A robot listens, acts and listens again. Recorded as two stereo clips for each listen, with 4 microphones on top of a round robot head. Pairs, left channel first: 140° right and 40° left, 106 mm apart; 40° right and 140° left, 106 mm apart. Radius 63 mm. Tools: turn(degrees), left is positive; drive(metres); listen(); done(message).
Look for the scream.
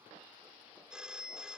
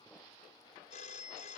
listen()
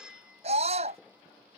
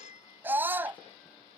turn(degrees=65)
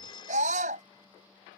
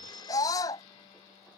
turn(degrees=20)
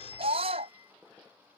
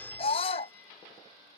done("Found it: a scream, straight ahead.")